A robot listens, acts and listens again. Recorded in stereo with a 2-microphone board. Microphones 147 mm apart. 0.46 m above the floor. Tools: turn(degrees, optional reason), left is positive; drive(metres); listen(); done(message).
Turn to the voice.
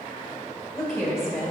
turn(degrees=30)
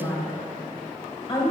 turn(degrees=150, reason="So it is at 150° left.")
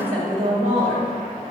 turn(degrees=-55, reason="The woman speaking is now 55° right.")
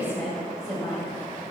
turn(degrees=15, reason="The woman speaking is now 15° left.")
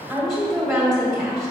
done("Facing the woman speaking.")